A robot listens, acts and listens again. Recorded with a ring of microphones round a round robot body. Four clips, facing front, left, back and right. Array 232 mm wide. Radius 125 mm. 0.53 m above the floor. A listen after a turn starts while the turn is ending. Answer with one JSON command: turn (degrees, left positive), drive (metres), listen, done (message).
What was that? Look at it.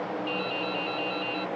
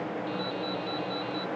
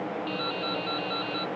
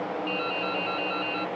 {"turn": -125}
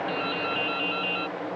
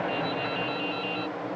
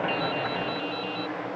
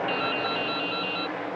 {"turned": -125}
{"turn": -30}
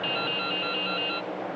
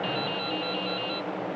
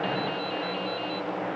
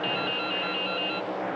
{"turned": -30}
{"turn": -15}
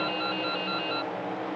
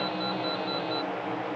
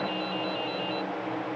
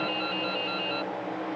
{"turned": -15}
{"done": "Facing the dripping."}